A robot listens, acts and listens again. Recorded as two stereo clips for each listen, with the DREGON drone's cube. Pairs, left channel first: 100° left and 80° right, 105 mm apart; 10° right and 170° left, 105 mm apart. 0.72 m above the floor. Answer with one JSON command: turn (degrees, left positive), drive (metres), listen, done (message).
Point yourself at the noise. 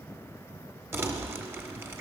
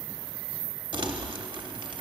{"turn": -145}
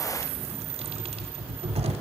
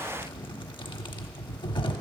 {"turn": -55}
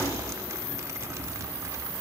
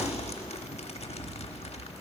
{"turn": -15}
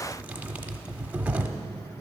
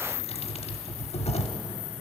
{"done": "Facing the crumpling, under 1 m away."}